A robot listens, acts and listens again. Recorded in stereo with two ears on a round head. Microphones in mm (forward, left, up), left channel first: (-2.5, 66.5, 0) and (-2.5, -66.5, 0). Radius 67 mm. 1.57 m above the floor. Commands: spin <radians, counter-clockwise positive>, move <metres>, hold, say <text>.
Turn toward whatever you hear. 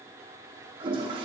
spin -0.61
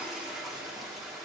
say Found it: a toilet flushing, straight ahead, under 1 m away.